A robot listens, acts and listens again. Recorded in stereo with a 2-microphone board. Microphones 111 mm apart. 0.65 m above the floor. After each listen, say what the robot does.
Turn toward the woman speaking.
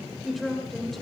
Turn 30° left.
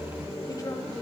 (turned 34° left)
Keep listening.
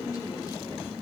Keep listening.
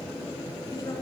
I heard a woman speaking, but can't make it out now. It was about 30° right or 145° left.